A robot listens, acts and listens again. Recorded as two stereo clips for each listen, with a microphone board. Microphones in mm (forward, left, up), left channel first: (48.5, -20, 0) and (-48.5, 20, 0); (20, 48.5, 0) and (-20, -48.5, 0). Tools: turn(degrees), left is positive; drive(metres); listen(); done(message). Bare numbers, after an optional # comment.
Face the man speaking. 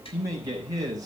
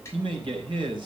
# The man speaking: 150° right.
turn(-150)
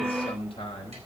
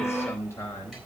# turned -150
done("Facing the man speaking.")